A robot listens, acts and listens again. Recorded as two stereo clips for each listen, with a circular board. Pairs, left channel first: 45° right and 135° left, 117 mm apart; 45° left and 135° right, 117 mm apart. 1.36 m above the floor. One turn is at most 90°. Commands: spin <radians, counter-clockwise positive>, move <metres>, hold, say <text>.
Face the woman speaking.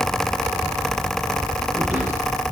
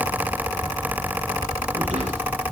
hold
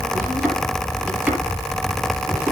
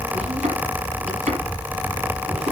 hold
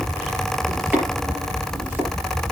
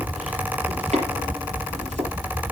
say I can't make out a woman speaking, only chopping.